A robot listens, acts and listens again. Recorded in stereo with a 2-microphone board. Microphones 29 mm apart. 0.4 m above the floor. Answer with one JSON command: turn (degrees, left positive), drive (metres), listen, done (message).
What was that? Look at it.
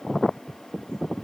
{"listen": true}
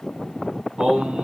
{"turn": -30}
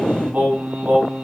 {"turn": -120}
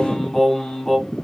{"turn": 10}
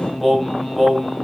{"done": "Found it: singing, straight ahead."}